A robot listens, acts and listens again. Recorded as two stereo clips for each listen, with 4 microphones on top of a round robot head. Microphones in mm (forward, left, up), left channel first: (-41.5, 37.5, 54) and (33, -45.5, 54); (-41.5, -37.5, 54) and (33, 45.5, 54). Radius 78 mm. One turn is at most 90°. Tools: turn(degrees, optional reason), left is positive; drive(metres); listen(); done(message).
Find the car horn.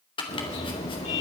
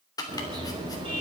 turn(degrees=90, reason="The car horn: 100° left.")
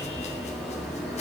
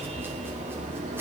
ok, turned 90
turn(degrees=45, reason="The car horn is now 45° left.")
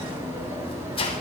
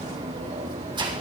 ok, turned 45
turn(degrees=20, reason="The car horn is now 20° left.")
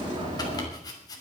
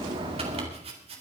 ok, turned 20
done("Facing the car horn.")